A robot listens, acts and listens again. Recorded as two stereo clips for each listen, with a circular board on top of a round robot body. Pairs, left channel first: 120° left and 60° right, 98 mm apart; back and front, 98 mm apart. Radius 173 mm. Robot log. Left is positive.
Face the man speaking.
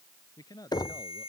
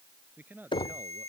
note: The man speaking: 70° left.
cmd yaw +70
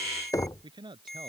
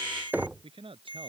note: The man speaking is now 25° right.
cmd yaw -25
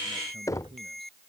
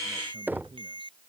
cmd idle
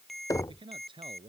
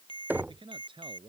note: The man speaking is now 35° right.
cmd yaw -35
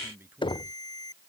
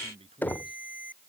end: Found it: a man speaking, straight ahead.